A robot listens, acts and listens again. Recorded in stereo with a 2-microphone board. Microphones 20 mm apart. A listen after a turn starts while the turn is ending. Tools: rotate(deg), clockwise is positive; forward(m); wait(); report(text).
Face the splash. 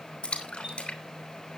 rotate(-70)
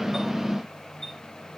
wait()
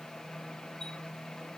report("I heard a splash, but can't make it out now. It was about straight ahead or 40° left.")